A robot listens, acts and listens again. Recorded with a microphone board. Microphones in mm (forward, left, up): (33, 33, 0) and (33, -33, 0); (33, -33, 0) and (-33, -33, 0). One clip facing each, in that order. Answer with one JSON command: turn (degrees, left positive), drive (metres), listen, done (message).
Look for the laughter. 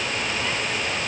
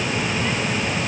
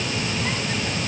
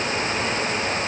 {"listen": true}
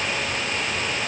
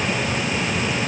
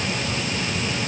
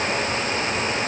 {"listen": true}
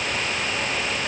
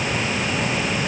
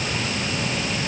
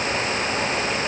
{"done": "I can't make out laughter to turn to."}